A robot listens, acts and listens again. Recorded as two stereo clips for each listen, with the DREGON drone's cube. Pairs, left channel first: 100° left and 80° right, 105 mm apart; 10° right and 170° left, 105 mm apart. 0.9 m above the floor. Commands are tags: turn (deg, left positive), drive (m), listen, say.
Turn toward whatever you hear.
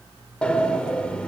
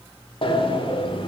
<turn deg="20"/>
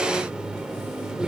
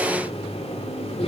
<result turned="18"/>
<say>Found it: a sliding door, straight ahead, 1 to 2 m away.</say>